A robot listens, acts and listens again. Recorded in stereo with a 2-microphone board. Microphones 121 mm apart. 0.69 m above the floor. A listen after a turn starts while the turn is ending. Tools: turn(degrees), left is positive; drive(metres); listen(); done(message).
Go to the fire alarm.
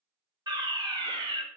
turn(degrees=-40)
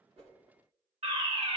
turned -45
turn(degrees=-90)
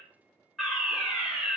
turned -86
drive(metres=1.0)
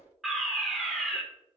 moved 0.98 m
drive(metres=1.0)
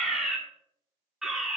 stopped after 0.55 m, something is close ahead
done("Arrived at the fire alarm, straight ahead.")